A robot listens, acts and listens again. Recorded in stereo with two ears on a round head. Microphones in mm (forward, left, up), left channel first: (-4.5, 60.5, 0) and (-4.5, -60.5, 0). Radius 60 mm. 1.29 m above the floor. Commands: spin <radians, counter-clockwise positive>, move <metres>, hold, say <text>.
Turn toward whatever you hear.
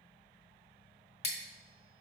spin 0.79
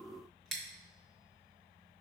say Found it: scissors, straight ahead.